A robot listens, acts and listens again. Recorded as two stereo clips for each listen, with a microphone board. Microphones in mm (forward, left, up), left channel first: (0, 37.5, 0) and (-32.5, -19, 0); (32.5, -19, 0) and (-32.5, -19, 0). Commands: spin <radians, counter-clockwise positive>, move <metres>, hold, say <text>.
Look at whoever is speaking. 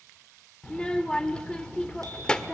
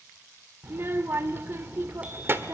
spin 2.36
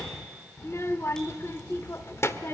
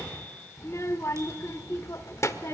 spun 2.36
spin 0.44
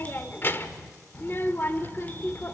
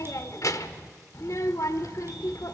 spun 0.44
spin 0.26
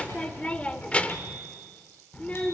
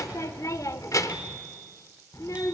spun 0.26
say Facing the child speaking.